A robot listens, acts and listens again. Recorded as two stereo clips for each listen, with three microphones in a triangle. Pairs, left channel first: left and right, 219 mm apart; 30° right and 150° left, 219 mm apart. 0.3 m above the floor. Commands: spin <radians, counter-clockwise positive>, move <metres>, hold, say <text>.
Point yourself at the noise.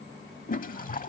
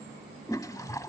spin 0.70
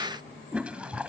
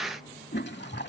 say Found it: a toilet flushing, straight ahead.